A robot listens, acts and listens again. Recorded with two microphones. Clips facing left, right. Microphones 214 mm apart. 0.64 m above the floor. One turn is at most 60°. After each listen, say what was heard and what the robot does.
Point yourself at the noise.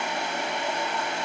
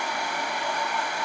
Keep listening.
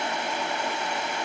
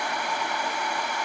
Keep listening.
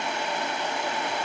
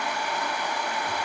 I can't make out anything.